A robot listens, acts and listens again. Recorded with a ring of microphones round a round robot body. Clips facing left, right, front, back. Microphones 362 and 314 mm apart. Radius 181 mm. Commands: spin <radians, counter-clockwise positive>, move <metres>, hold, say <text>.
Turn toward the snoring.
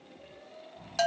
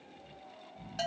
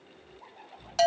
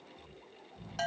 spin -2.79
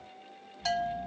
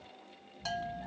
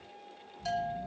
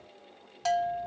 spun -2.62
spin -0.17
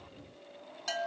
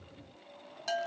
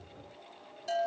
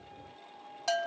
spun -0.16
hold
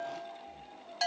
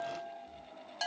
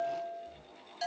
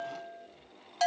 say Facing where the snoring came from. I can't hear it now.